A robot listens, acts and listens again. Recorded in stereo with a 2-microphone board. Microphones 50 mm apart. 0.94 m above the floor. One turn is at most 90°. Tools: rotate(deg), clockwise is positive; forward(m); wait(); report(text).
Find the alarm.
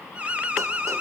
rotate(25)
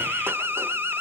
rotate(90)
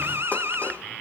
rotate(55)
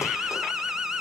rotate(15)
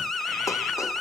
report("Found it: an alarm, straight ahead, 2 to 4 m away.")